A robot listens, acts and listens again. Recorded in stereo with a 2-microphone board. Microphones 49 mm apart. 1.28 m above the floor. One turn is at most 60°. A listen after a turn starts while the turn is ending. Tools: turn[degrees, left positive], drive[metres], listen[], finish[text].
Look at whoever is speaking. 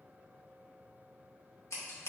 Action: listen[]
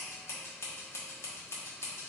Action: listen[]
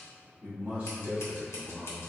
Thought: The man speaking: about 25° right or 155° right.
Action: turn[-25]
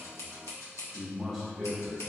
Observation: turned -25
Action: finish[Facing the man speaking.]